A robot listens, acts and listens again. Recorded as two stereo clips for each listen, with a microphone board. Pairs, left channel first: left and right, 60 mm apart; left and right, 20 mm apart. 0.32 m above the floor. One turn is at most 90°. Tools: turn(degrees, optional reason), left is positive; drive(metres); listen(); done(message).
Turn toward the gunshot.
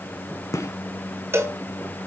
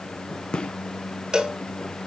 turn(degrees=60, reason="The gunshot: about 60° left or 120° left.")
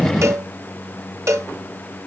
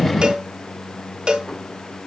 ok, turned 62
listen()
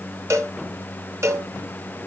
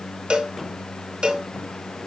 done("I heard a gunshot, but can't make it out now. It was about 5° right or 60° left.")